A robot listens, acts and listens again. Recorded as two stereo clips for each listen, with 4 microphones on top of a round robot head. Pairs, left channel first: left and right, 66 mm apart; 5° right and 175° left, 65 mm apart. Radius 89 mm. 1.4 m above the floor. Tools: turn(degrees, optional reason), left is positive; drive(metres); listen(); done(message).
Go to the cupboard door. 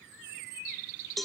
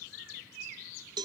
listen()
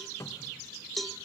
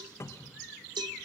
turn(degrees=35, reason="The cupboard door: 35° left.")
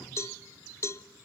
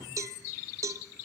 listen()
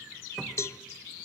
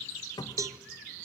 drive(metres=1.0)
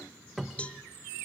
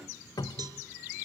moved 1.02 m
drive(metres=1.0)
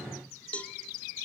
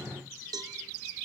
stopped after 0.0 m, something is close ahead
done("Arrived at the cupboard door, straight ahead.")